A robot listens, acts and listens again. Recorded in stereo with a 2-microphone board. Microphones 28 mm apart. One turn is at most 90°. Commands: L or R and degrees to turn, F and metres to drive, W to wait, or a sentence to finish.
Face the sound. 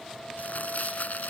L70
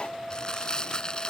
L30
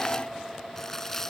L20
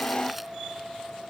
W
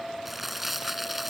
Facing the crumpling.